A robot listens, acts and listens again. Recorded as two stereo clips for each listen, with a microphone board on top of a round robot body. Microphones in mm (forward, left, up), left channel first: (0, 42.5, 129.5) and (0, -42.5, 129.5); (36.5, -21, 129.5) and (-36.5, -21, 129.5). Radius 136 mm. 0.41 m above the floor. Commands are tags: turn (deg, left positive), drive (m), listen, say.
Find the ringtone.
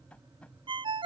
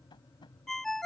<turn deg="-85"/>
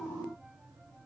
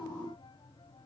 <listen/>
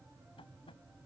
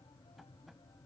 <listen/>
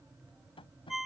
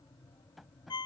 <say>Found it: a ringtone, straight ahead.</say>